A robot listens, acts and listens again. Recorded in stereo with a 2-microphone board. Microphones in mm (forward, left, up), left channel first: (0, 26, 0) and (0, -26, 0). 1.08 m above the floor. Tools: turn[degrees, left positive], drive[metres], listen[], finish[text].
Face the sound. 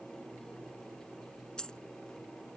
Action: turn[30]
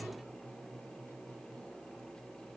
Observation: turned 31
Action: listen[]
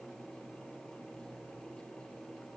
Action: finish[I heard a dropped coin, but can't make it out now. It was about 15° right or 135° left.]